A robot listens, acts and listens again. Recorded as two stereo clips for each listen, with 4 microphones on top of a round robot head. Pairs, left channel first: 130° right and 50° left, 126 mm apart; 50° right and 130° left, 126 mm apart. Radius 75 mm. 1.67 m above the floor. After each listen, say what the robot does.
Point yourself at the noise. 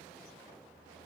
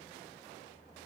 Keep listening.
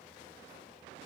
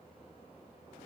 Keep listening.
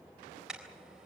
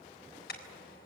Turn 35° right.
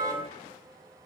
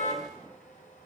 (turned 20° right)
Turn 15° right.
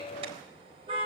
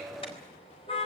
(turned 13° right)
Found it: a car horn, straight ahead, 2 to 4 m away.